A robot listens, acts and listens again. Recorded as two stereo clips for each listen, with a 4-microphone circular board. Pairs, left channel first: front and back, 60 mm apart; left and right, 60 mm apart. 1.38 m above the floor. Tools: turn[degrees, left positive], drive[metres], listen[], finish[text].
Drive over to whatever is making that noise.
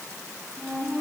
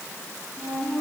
Thought: The flute: 90° right.
Action: turn[-90]
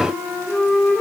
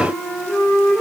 Thought: The flute is now 10° left.
Action: turn[10]
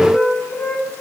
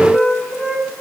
Action: drive[1.0]
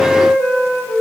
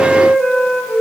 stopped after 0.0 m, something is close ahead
Action: finish[Something is in my way. I am facing the flute but have not reached it.]